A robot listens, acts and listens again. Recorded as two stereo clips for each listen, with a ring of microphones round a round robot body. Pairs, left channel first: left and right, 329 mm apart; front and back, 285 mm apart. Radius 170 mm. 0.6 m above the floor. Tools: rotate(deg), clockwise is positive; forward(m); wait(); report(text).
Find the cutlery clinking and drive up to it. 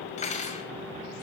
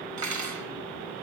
rotate(-160)
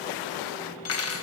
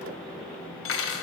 rotate(-45)
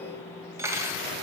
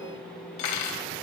rotate(10)
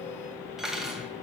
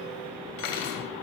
forward(1.0)
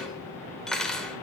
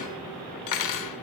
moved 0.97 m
forward(1.0)
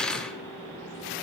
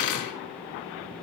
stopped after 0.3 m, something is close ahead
report("I am next to the cutlery clinking.")